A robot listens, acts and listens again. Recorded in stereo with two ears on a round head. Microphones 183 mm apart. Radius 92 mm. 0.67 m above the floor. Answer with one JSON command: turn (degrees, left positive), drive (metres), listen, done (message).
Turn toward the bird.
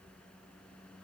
{"listen": true}
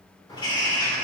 {"turn": 20}
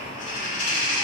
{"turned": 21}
{"turn": 135}
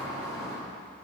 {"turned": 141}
{"done": "Facing the bird, 2 to 4 m away."}